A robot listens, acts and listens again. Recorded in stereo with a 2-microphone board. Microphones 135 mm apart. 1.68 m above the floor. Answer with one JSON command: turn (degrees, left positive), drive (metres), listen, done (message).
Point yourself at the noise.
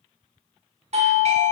{"turn": -50}
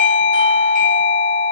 {"turn": -80}
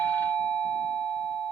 {"done": "Found it: a doorbell, straight ahead."}